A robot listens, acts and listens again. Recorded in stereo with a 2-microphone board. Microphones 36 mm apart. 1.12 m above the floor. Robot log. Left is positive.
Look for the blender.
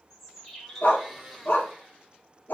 cmd yaw -30
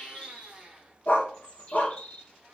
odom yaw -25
note: So it is at 145° right.
cmd yaw -145
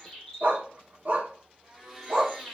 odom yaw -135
note: The blender is now 10° right.
cmd yaw -10
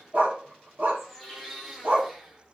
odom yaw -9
end: Facing the blender.